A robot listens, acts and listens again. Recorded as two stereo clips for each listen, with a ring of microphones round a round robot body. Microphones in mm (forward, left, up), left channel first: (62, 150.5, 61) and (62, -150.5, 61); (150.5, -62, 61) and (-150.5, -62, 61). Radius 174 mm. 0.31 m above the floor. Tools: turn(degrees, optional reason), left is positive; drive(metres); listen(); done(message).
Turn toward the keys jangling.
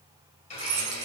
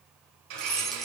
turn(degrees=-90, reason="The keys jangling: 90° right.")
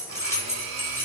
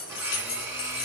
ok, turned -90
turn(degrees=10, reason="The keys jangling is now 10° left.")
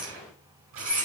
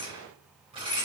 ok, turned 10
done("Found it: keys jangling, straight ahead, 2 to 4 m away.")